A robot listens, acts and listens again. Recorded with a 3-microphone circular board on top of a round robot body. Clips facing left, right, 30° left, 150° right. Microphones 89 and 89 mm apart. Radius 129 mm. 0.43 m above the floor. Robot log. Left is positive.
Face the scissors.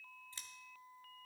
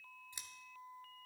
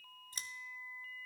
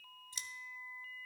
note: The scissors: 15° right.
cmd yaw -15
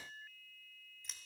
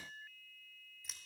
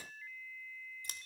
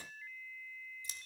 end: Found it: scissors, straight ahead, under 1 m away.